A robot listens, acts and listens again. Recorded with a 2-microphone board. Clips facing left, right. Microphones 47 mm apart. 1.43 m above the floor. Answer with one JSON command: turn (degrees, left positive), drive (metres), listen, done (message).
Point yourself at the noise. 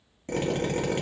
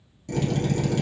{"turn": 30}
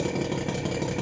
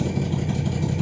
{"turn": 120}
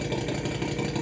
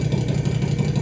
{"turn": 25}
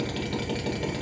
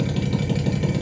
{"done": "Found it: a drill, straight ahead, 1 to 2 m away."}